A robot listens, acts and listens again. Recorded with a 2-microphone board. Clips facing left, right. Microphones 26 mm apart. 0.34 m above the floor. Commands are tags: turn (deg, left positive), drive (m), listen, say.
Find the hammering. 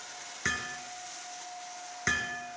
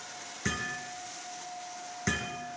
<turn deg="15"/>
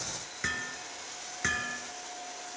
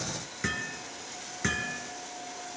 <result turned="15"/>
<say>Facing the hammering.</say>